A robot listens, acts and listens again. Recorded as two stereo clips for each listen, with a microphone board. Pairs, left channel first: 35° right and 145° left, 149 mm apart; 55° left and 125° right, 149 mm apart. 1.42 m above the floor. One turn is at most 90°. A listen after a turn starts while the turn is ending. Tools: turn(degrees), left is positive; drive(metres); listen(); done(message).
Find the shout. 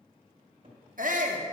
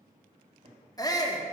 turn(degrees=90)
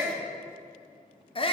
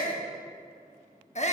turn(degrees=20)
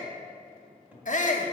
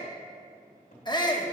done("Found it: a shout, straight ahead, 1 to 2 m away.")